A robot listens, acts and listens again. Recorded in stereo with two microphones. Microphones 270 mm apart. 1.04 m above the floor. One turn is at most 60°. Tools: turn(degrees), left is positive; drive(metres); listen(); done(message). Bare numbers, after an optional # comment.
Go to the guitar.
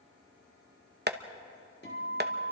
# The guitar: about 40° left or 140° left.
turn(40)
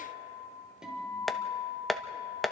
drive(1.0)
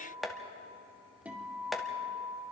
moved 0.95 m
drive(1.0)
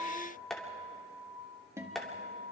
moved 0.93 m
# The guitar is now 10° right.
turn(-10)
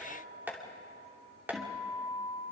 drive(1.0)
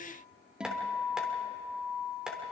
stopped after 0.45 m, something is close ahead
done("Arrived at the guitar, straight ahead.")